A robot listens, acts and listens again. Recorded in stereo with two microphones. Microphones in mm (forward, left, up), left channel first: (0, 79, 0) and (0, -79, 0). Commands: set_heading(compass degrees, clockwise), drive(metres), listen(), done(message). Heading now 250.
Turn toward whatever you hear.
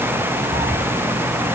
set_heading(300)
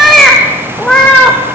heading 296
done("Found it: a cat meowing, straight ahead.")